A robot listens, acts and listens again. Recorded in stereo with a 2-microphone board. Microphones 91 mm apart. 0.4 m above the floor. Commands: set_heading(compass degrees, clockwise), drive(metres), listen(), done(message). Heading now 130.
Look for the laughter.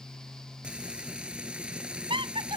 set_heading(195)
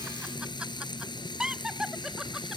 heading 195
done("Found it: laughter, straight ahead.")